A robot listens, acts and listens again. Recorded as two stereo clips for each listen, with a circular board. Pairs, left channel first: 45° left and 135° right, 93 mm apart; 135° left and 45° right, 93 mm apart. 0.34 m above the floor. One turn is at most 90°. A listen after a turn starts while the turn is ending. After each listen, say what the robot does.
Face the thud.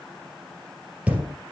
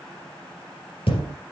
Turn 90° left.
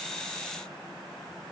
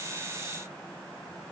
Turn 60° left.
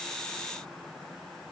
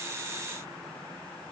I heard a thud from this way, but can't make it out now.